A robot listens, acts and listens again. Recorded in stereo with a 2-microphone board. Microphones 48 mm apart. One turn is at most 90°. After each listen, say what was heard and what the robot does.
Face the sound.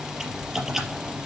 Turn 30° right.
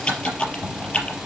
So it is at 25° left. Turn 25° left.
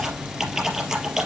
Facing the typing on a keyboard, over 4 m away.